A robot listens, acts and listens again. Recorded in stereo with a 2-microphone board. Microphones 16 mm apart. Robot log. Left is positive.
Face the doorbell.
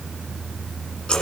cmd idle
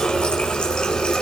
cmd idle
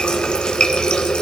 end: I can't make out a doorbell, only a running tap.